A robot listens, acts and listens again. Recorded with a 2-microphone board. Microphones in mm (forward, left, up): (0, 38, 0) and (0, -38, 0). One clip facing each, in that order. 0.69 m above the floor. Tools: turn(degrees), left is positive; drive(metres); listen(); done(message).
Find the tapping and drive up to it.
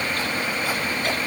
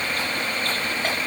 listen()
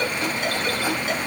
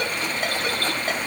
listen()
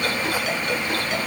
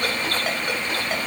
done("I can't make out tapping to turn to.")